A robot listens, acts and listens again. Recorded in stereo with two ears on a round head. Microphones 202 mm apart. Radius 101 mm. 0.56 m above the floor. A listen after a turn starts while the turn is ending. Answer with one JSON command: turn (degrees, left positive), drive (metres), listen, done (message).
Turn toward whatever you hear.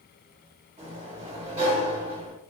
{"turn": -30}
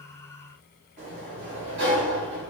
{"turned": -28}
{"turn": -125}
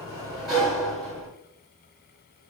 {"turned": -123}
{"done": "Found it: a sliding door, straight ahead."}